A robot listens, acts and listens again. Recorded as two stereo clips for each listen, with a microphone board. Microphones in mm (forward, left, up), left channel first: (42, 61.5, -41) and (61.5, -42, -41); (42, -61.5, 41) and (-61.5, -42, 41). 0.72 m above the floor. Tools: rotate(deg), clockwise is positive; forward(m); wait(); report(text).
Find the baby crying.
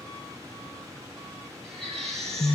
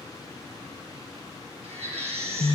rotate(175)
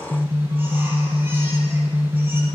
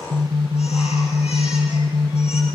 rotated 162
rotate(10)
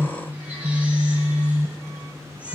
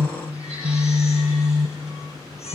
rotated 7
wait()
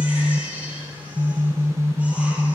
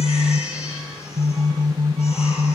report("I heard a baby crying from this way, but can't make it out now.")